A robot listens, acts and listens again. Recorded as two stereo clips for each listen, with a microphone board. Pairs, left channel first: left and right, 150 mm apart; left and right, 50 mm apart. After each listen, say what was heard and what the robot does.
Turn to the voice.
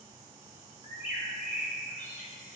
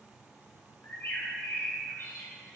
Keep listening.
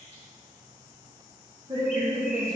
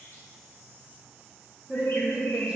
The woman speaking: about 25° right or 155° right. Turn 25° right.
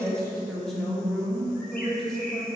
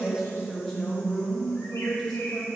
Found it: a woman speaking, straight ahead.